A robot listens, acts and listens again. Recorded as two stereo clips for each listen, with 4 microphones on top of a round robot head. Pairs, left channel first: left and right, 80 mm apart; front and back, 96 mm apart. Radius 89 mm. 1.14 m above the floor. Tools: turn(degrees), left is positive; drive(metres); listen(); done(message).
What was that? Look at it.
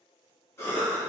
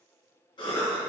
turn(degrees=35)
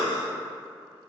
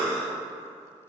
done("Found it: a cough, straight ahead.")